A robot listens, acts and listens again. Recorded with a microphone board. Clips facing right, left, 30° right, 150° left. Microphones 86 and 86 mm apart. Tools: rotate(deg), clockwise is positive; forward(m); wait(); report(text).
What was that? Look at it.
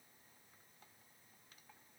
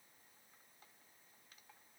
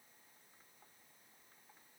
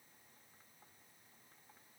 wait()
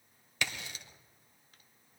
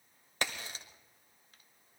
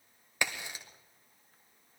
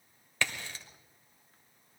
rotate(-45)
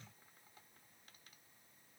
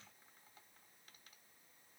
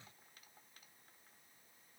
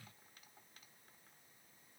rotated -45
report("Facing where the crack came from. I can't hear it now.")